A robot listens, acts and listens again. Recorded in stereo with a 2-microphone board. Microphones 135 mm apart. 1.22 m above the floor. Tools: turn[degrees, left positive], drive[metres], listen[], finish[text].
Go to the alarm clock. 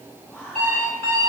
Action: turn[-90]
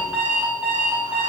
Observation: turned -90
Thought: So it is at 10° right.
Action: turn[-10]
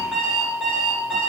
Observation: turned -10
Action: drive[1.0]
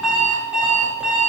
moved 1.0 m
Thought: The alarm clock is now 10° right.
Action: turn[-10]
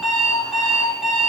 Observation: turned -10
Action: drive[1.0]
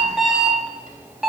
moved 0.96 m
Action: drive[1.0]
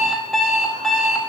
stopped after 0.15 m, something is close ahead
Action: finish[I am next to the alarm clock.]